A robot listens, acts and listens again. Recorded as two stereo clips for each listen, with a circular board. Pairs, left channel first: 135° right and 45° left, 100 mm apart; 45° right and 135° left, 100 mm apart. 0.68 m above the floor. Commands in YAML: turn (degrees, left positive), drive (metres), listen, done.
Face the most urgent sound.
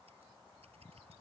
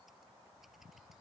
listen: true
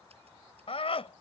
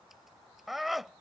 turn: -135
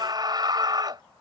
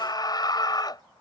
done: "Found it: a scream, straight ahead."